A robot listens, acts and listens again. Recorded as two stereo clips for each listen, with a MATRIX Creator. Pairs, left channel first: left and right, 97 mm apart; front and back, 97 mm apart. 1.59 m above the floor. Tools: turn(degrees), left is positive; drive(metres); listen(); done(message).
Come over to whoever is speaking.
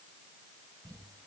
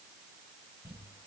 listen()
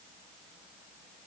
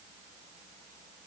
listen()
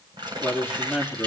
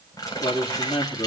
turn(degrees=-10)
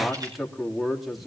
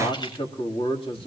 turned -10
drive(metres=1.0)
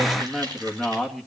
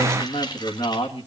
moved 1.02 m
drive(metres=1.0)
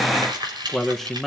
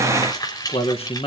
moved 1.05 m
drive(metres=1.0)
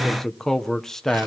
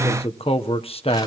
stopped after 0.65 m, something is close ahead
done("I am next to the man speaking.")